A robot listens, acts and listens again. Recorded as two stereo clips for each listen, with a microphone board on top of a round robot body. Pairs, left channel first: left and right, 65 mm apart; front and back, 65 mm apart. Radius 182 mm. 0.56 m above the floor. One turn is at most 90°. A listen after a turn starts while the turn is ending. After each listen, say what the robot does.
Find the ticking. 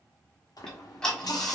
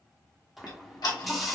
Turn 10° left.
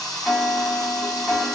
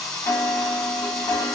Facing the ticking, 1 to 2 m away.